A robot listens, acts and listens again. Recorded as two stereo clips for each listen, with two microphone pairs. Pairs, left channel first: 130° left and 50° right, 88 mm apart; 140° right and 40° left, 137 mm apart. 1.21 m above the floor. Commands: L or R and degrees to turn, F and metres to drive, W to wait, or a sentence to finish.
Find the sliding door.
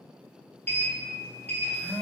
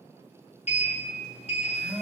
R165
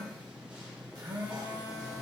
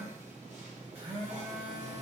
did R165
L30
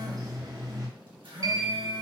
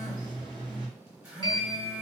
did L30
R10
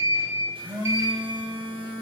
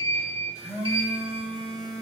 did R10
Facing the sliding door, under 1 m away.